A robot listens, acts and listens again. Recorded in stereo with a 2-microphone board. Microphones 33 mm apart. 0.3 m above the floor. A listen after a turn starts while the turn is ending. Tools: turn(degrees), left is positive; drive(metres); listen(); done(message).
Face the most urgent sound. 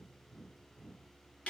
listen()
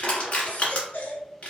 turn(degrees=55)
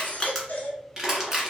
turn(degrees=70)
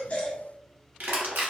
listen()
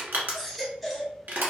done("Found it: a baby crying, straight ahead.")